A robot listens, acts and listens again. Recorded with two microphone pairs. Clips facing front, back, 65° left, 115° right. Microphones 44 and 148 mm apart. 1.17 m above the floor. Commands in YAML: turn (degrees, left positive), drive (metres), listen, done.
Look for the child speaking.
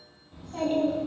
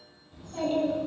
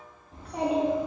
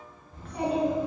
turn: 65
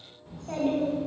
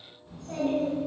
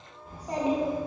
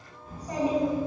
turn: -10
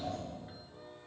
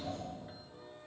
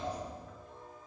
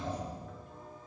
turn: -10
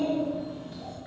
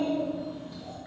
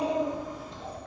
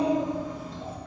turn: -30
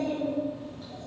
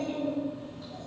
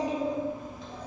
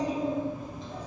turn: -20
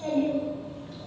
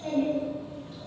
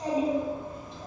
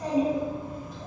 done: "Found it: a child speaking, straight ahead, 1 to 2 m away."